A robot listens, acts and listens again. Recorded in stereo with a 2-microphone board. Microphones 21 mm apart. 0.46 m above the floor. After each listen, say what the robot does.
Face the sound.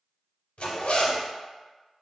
Turn 90° left.
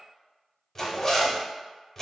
Turn 15° left.
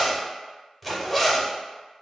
Found it: a zipper, straight ahead.